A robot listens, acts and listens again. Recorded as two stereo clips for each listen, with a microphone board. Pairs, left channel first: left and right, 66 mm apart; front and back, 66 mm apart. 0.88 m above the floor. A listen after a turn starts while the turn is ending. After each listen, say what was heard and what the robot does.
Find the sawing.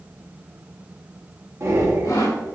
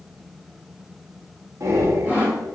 The sawing: 115° left. Turn 115° left.
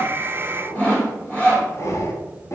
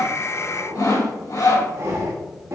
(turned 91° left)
The sawing is now 25° left. Turn 25° left.
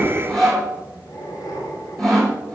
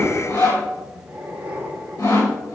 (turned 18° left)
Found it: sawing, straight ahead.